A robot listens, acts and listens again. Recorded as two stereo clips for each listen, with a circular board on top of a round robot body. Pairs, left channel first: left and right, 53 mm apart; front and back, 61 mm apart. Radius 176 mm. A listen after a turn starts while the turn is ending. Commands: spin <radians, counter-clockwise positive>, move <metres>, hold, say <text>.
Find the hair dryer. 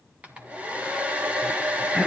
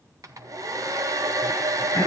spin -2.71
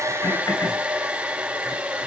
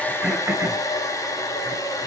spin -0.35
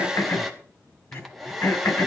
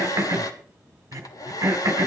say Facing the hair dryer.